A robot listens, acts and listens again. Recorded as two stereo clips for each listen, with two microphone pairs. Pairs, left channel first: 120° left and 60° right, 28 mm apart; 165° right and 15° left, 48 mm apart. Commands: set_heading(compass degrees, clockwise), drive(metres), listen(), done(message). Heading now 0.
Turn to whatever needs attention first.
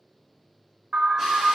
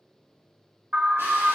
set_heading(35)
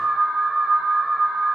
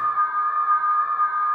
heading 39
done("Facing the alarm.")